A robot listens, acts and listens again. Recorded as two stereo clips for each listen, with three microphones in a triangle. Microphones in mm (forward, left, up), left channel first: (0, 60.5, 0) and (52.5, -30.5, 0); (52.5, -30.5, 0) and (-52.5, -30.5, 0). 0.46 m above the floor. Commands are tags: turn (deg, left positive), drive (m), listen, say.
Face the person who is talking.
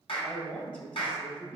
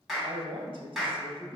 <turn deg="-165"/>
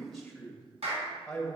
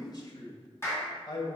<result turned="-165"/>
<turn deg="35"/>
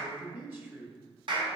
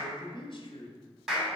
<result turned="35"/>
<turn deg="10"/>
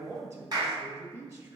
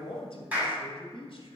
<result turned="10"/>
<say>Facing the man speaking.</say>